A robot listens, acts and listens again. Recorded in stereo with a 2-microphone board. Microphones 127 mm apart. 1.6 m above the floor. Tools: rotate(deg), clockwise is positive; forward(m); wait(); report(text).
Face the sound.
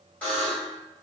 rotate(-30)
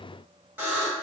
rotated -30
rotate(15)
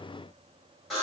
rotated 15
report("Found it: a buzzer, straight ahead, 1 to 2 m away.")